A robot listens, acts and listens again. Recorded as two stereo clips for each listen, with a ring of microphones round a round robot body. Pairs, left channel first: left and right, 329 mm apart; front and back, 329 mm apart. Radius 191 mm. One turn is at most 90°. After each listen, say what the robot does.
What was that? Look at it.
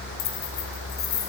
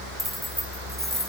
Turn 90° left.
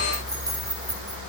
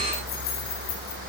Turn 10° right.
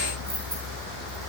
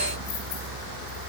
Keep listening.
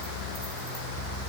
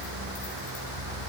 Keep listening.
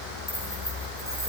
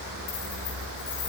Facing where the keys jangling came from. I can't hear it now.